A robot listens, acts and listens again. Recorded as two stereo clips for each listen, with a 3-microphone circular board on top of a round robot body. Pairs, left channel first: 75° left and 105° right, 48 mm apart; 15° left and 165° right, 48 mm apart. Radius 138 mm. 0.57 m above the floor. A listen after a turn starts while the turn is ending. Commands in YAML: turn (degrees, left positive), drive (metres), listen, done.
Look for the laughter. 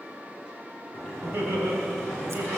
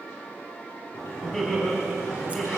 turn: -65
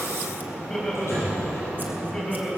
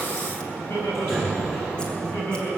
done: "Found it: laughter, straight ahead."